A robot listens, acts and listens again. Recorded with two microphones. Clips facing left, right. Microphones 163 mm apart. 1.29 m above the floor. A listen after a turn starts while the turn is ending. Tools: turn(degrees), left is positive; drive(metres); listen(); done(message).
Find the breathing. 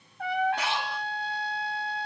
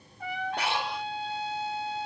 turn(degrees=-55)
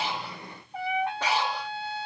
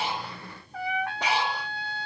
turn(degrees=-15)
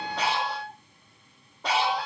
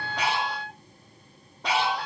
done("Found it: breathing, straight ahead, 1 to 2 m away.")